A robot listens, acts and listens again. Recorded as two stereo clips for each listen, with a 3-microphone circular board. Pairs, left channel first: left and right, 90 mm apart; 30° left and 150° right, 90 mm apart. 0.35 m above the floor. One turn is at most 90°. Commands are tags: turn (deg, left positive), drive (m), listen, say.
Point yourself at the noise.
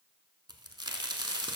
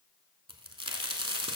<turn deg="-90"/>
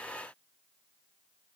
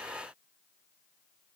<turn deg="-35"/>
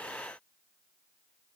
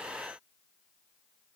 <say>Facing where the crack came from. I can't hear it now.</say>